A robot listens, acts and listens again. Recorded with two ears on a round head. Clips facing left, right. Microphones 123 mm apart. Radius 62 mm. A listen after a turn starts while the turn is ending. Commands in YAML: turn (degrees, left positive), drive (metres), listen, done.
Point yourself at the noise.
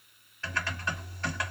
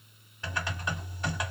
turn: -30
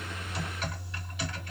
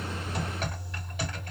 turn: -135
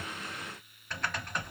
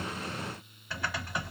done: "Found it: typing on a keyboard, straight ahead, 1 to 2 m away."